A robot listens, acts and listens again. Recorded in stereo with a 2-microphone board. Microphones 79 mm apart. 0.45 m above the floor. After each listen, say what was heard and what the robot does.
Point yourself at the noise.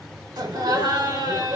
The laughter: about 65° right or 115° right. Turn 65° right.
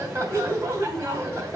So it is at 35° right. Turn 35° right.
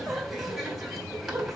Found it: laughter, straight ahead, 2 to 4 m away.